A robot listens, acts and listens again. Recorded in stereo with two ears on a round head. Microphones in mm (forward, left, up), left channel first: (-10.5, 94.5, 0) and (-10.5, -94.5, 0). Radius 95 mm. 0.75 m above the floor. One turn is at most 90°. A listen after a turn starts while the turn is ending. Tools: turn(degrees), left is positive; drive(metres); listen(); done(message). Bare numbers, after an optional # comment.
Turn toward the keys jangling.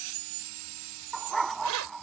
# The keys jangling: about 70° right or 110° right.
turn(-70)
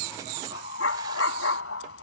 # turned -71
listen()
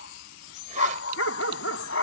listen()
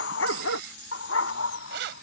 # So it is at 55° right.
turn(-55)
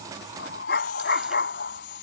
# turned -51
listen()
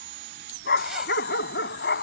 listen()
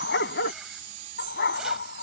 done("Facing where the keys jangling came from. I can't hear it now.")